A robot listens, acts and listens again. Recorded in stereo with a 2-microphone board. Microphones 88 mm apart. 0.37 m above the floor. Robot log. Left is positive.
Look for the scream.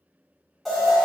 cmd idle
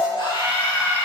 note: The scream: about 60° left or 120° left.
cmd yaw +60
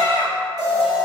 cmd idle
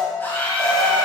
note: So it is at 25° left.
cmd yaw +25
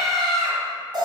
end: Found it: a scream, straight ahead, 2 to 4 m away.